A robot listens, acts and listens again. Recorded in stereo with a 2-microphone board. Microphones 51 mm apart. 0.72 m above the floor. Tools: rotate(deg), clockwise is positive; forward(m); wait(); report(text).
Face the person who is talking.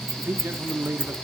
rotate(50)
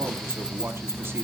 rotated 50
wait()
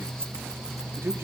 rotate(70)
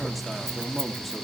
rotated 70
wait()
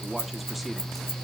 wait()
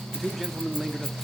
report("Facing the man speaking, 1 to 2 m away.")